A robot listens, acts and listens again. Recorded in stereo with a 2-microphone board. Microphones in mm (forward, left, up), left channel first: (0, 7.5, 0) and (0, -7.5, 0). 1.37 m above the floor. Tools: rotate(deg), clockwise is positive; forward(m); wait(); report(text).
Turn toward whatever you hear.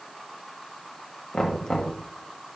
rotate(-60)
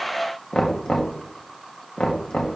rotate(-55)
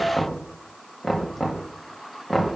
report("Found it: knocking, straight ahead.")